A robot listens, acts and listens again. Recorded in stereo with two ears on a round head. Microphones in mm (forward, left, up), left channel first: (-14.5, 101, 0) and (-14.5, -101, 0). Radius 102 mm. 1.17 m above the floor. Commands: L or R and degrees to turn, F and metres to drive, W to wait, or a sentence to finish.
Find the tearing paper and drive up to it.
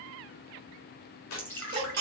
L90
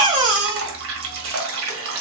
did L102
R10
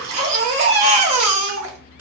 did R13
W
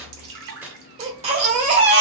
F1.0
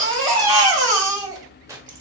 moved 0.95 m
R15
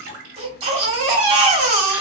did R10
W
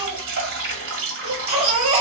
W
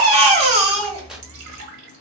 I heard tearing paper from this way, but can't make it out now. I did not reach it.